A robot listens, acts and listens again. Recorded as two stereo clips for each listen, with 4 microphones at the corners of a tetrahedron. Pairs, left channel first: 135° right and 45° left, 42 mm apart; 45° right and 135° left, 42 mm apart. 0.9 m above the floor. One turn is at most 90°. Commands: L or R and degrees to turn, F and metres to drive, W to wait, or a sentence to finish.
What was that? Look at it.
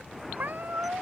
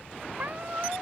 L85
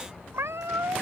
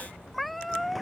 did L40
L45
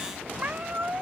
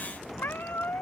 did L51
R10
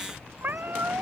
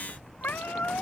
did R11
Found it: a cat meowing, straight ahead.